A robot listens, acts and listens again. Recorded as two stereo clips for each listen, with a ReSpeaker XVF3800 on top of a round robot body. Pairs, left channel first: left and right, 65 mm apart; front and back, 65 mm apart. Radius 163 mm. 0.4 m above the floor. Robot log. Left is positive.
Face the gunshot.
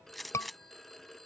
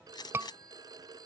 end: Facing the gunshot.